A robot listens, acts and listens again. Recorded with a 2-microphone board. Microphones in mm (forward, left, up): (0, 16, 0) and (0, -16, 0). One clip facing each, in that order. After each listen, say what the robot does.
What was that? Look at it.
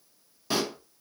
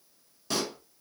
Turn 15° left.
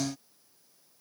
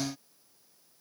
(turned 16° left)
Keep listening.
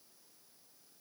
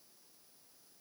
I heard a pop, but can't make it out now. It was about straight ahead or 145° left.